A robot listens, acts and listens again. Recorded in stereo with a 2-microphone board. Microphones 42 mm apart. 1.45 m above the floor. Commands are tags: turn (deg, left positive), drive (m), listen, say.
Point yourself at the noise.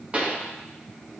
<turn deg="-30"/>
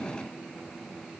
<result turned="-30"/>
<listen/>
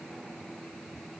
<say>I heard a pop, but can't make it out now. It was about straight ahead or 120° right.</say>